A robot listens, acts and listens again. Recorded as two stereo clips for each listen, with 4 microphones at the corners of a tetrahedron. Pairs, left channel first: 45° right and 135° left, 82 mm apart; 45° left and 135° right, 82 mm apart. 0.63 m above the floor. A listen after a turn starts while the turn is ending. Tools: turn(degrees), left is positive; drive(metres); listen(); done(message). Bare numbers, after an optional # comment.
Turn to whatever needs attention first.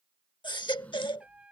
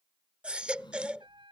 # The baby crying: 60° right.
turn(-60)
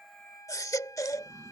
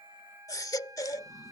done("Facing the baby crying.")